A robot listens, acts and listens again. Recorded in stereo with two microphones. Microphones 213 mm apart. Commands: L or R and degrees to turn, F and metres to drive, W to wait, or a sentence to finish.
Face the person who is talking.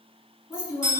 L25
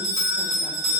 W
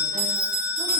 W
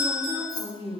L125
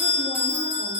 W
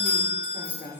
L20
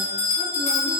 W
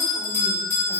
W
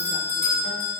I heard a woman speaking from this way, but can't make it out now.